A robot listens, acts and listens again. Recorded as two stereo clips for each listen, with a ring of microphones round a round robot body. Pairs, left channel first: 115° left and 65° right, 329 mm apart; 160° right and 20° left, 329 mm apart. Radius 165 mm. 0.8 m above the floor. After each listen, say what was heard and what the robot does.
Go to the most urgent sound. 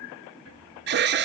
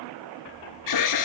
The alarm: 125° right. Turn 125° right.
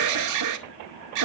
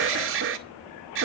The alarm is now 30° right. Turn 30° right.
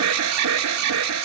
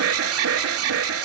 The alarm is now 25° right. Turn 25° right.
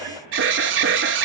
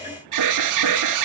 The alarm is now 10° right. Turn 10° right.
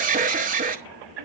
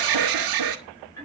Drive 1.0 m forward.
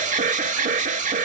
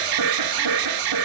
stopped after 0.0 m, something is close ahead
Blocked. The alarm is further on, straight ahead.